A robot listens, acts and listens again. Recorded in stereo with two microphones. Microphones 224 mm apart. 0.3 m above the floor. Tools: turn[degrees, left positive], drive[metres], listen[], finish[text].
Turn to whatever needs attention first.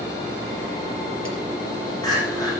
Thought: The crying: about 15° left or 165° left.
Action: turn[15]
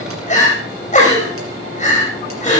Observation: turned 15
Thought: So it is at 150° left.
Action: turn[150]
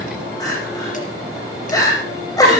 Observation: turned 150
Thought: The crying is now 15° left.
Action: turn[15]
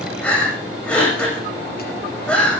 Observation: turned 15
Action: finish[Found it: crying, straight ahead.]